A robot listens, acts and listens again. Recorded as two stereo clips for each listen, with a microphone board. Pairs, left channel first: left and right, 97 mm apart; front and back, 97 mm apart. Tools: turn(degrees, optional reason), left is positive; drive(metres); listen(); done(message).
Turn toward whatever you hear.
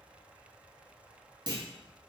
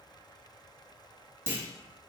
turn(degrees=-115, reason="The clunk: 115° right.")
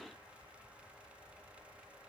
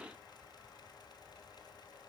done("Facing where the clunk came from. I can't hear it now.")